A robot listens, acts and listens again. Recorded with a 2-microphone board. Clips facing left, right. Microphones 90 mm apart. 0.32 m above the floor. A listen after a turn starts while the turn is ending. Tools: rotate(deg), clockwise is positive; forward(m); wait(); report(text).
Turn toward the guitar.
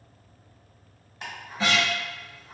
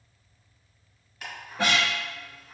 rotate(70)
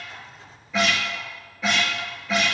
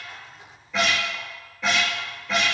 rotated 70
report("Found it: a guitar, straight ahead, under 1 m away.")